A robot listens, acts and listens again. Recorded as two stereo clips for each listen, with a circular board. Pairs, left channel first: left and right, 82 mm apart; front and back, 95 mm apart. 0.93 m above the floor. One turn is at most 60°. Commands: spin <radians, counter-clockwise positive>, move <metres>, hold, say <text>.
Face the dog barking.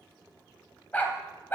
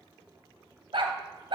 spin 1.05
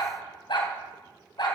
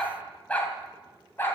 spin 1.05
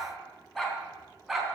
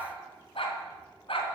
say Found it: a dog barking, straight ahead.